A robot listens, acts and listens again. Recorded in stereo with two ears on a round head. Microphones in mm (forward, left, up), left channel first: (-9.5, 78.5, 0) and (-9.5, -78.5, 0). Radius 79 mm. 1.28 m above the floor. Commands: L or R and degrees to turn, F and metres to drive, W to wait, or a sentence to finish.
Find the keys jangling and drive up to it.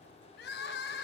W
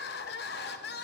W
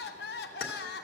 L60
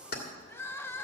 L55
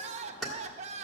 F1.0
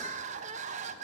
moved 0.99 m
W
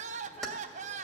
F1.0
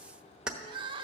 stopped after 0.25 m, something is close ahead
Arrived at the keys jangling, straight ahead.